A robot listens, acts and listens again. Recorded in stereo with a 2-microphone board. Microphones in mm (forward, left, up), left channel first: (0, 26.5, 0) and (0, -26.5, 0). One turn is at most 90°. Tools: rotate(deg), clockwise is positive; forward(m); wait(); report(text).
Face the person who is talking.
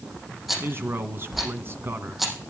rotate(50)
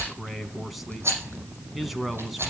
report("Facing the man speaking, 2 to 4 m away.")